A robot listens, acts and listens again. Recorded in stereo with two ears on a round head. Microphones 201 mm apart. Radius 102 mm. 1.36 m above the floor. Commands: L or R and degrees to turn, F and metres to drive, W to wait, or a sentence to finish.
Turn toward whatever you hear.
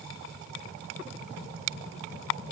W
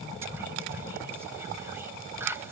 R30
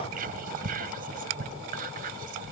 R140
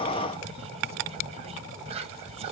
R25
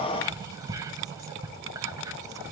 R15
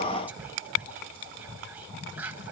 Found it: whispering, straight ahead, 1 to 2 m away.